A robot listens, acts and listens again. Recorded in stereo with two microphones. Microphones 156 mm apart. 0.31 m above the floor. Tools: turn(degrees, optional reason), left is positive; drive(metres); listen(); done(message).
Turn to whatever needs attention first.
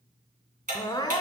turn(degrees=25, reason="The crying: about 25° left or 155° left.")
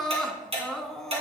done("Found it: crying, straight ahead.")